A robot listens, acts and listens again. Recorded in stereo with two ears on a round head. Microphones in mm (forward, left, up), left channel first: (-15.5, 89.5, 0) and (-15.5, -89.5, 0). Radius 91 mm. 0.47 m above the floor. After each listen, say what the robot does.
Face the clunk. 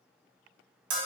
Keep listening.
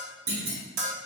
Turn 45° right.
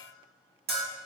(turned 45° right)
Keep listening.
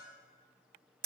I heard a clunk, but can't make it out now. It was about straight ahead or 90° right.